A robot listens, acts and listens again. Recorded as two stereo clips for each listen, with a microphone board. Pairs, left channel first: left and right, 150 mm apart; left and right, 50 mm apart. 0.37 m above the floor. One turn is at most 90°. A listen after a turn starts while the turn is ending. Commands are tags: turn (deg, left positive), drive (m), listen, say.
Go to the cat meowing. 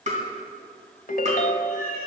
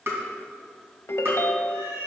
<turn deg="-70"/>
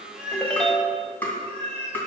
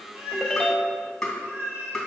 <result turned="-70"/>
<turn deg="-40"/>
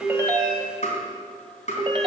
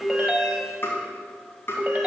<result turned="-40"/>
<listen/>
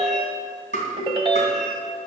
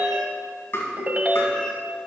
<listen/>
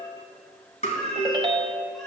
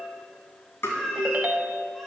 <drive m="1.0"/>
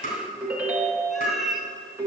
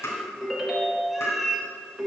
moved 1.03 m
<drive m="1.0"/>
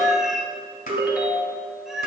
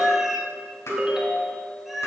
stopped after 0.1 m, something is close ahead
<say>I am next to the cat meowing.</say>